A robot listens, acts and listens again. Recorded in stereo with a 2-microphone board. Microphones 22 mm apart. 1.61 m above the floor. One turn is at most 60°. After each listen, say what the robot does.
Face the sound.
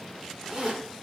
Turn 25° right.
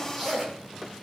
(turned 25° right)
Facing the zipper, over 4 m away.